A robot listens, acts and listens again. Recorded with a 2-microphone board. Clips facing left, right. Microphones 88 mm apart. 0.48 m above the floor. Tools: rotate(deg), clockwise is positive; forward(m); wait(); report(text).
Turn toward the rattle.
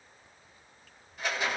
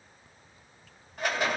rotate(50)
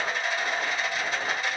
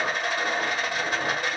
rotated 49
rotate(70)
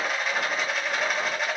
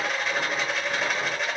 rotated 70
report("Facing the rattle.")